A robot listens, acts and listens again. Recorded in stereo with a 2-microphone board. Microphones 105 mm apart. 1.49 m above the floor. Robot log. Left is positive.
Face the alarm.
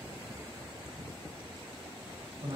cmd idle
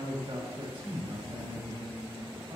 cmd idle
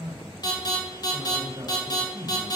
note: The alarm: about 40° left or 140° left.
cmd yaw +40
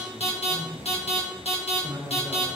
note: So it is at 100° left.
cmd yaw +100
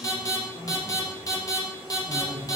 note: The alarm is now 35° left.
cmd yaw +35
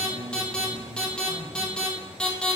note: The alarm is now 10° left.
cmd yaw +10
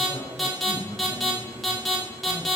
end: Facing the alarm.